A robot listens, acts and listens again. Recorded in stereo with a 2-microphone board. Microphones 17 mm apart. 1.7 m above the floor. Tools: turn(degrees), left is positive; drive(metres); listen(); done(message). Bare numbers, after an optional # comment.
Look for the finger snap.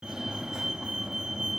listen()
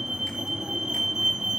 listen()
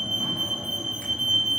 done("I can't make out a finger snap, only a fire alarm.")